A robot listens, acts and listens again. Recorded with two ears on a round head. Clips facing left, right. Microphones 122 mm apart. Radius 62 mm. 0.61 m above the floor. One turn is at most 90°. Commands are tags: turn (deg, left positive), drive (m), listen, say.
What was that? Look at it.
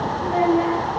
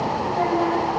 <turn deg="90"/>
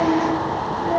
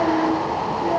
<say>Found it: a child speaking, straight ahead, over 4 m away.</say>